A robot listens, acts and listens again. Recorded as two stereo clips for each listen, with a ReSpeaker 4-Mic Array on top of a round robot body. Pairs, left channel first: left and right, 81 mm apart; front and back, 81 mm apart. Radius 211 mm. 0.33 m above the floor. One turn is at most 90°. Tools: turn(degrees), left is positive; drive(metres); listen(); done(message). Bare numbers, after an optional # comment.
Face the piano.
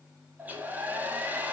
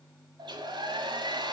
listen()
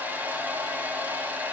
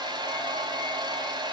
listen()
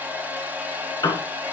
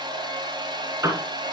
# The piano: 130° left.
turn(90)
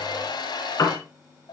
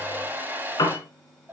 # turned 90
# The piano is now 40° left.
turn(40)
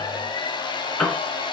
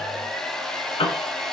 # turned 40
# The piano is now 10° left.
turn(10)
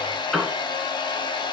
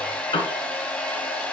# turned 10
done("Found it: a piano, straight ahead.")